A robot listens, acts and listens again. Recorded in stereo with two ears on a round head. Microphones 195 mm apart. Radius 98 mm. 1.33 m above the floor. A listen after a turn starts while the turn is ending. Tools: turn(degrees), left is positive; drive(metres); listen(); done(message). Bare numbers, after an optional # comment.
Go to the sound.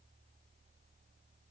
listen()
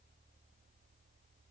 listen()
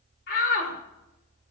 # The shout: about 50° left or 130° left.
turn(50)
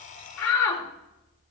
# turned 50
# So it is at 80° left.
turn(80)
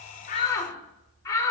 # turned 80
# The shout is now 15° left.
turn(15)
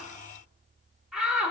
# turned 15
drive(1.0)
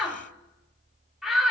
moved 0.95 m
drive(1.0)
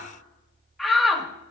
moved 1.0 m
drive(1.0)
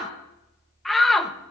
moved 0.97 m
drive(1.0)
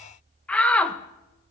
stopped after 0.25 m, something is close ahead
done("Arrived at the shout, straight ahead.")